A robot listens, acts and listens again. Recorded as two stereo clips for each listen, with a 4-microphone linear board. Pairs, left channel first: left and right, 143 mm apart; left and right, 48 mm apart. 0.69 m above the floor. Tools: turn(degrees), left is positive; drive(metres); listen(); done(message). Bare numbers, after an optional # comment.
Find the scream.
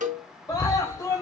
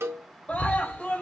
# The scream: about 25° left or 155° left.
turn(25)
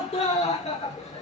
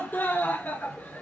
# So it is at 130° left.
turn(130)
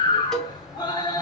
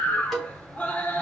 # The scream is now 35° left.
turn(35)
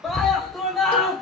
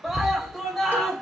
done("Found it: a scream, straight ahead, 1 to 2 m away.")